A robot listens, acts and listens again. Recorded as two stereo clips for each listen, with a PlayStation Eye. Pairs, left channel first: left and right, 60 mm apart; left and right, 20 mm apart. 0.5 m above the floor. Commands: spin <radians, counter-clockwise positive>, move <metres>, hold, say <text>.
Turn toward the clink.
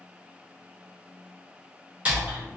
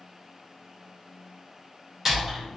hold
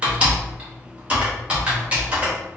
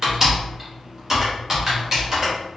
hold
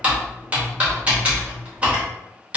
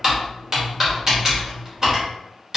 say I can't make out a clink to turn to.